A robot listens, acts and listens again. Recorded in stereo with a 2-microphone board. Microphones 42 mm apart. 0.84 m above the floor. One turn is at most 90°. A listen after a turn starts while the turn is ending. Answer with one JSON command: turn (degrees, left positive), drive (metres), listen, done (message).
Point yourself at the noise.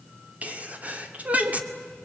{"turn": -35}
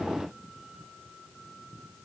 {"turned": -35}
{"listen": true}
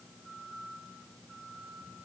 {"done": "I heard a sneeze, but can't make it out now. It was about straight ahead or 110° right."}